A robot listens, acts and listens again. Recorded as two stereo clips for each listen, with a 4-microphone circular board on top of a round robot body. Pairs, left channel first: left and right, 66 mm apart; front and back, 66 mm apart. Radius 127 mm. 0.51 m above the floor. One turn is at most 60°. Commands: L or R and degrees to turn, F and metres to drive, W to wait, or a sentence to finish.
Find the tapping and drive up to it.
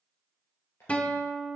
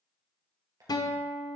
L60
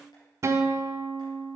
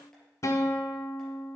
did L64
L60
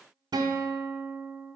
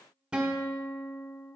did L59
L20
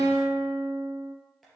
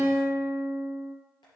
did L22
I heard tapping from this way, but can't make it out now. I did not reach it.